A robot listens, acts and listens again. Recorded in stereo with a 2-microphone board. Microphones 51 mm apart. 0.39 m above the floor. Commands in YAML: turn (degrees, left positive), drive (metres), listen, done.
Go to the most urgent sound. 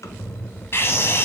turn: 50
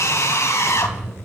turn: 75
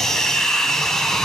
turn: 10
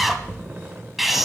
drive: 1.0
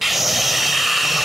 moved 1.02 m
drive: 1.0
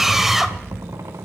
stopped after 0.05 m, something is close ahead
done: "Arrived at the scream, straight ahead."